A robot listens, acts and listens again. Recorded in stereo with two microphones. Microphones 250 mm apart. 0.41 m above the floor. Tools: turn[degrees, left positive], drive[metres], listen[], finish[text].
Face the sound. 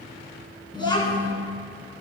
Thought: The child speaking: about 15° left or 165° left.
Action: turn[15]
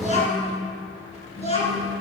Thought: The child speaking: about 25° left or 155° left.
Action: turn[25]
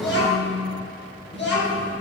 Thought: So it is at 135° left.
Action: turn[135]
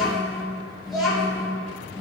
Action: finish[Found it: a child speaking, straight ahead.]